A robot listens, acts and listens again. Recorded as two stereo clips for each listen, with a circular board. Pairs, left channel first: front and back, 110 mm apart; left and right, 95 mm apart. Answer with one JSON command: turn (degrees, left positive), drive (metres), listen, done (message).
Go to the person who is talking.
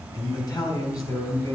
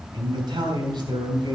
{"turn": -60}
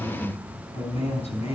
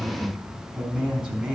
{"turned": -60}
{"turn": -10}
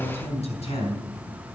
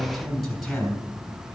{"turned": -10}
{"drive": 1.0}
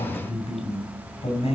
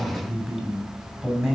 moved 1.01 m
{"turn": -10}
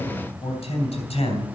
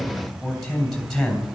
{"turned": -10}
{"drive": 1.0}
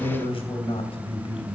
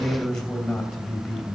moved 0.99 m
{"turn": 10}
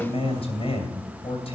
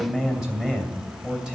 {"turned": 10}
{"drive": 1.0}
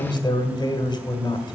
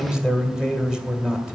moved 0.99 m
{"turn": -10}
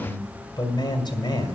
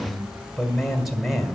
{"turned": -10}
{"drive": 1.0}
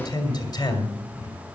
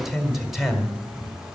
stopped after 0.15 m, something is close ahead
{"done": "I am next to the man speaking."}